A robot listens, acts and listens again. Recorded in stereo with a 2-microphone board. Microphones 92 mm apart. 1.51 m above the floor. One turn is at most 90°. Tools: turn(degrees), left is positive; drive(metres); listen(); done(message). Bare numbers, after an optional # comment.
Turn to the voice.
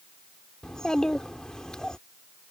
turn(30)
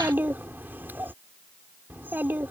# So it is at 20° right.
turn(-20)
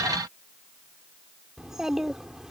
done("Facing the child speaking.")